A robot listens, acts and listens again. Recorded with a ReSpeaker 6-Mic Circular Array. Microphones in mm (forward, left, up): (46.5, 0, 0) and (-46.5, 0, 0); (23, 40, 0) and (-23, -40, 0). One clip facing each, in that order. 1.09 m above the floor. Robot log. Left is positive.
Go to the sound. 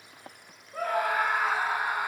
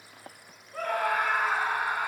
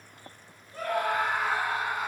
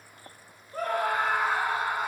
note: The scream: 80° right.
cmd yaw -80
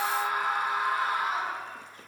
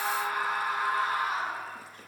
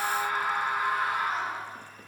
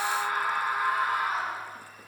note: The scream is now 35° right.
cmd yaw -35
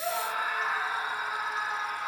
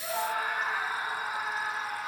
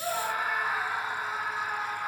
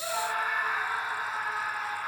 note: The scream is now 20° right.
cmd yaw -20
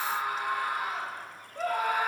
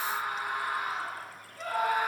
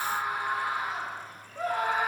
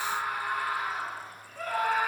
cmd fwd 1.0
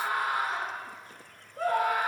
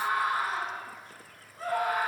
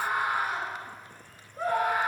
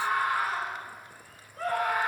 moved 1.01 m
note: The scream is now 10° right.
cmd yaw -10
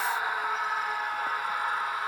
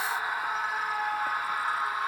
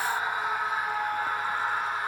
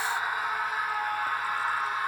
cmd fwd 1.0
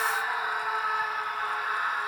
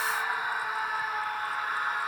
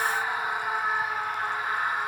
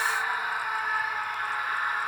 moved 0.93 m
cmd fwd 1.0
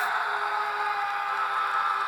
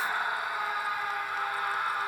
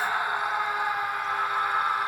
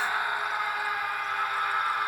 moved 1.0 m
cmd fwd 1.0
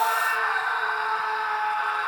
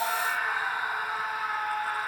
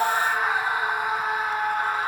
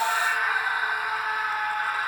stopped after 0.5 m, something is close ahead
end: I am next to the scream.